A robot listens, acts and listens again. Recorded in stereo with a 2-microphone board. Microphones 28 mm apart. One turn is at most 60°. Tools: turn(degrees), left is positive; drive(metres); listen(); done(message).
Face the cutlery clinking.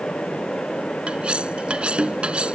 turn(degrees=-40)
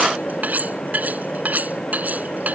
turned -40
turn(degrees=-60)
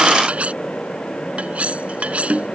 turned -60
turn(degrees=-55)
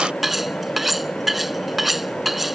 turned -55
turn(degrees=-10)
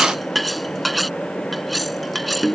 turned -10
done("Found it: cutlery clinking, straight ahead.")